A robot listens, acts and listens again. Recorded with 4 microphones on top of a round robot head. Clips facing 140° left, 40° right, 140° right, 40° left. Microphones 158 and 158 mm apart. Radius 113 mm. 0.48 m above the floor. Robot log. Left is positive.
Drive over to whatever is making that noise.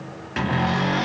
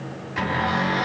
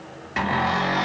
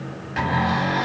note: The cupboard door: 155° left.
cmd yaw +155
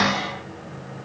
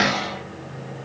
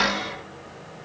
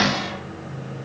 note: The cupboard door is now 35° left.
cmd yaw +35
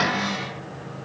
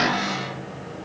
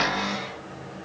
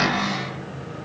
cmd fwd 1.0
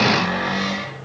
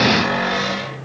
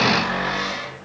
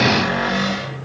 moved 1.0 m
cmd fwd 1.0
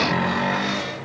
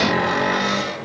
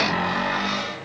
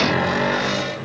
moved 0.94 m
cmd fwd 1.0
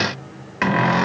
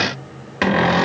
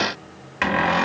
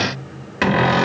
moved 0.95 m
cmd fwd 1.0
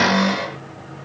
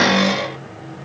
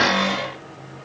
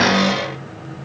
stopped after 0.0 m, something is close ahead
note: The cupboard door is now 15° left.
cmd yaw +15
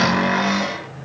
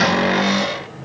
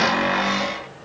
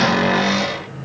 end: I am next to the cupboard door.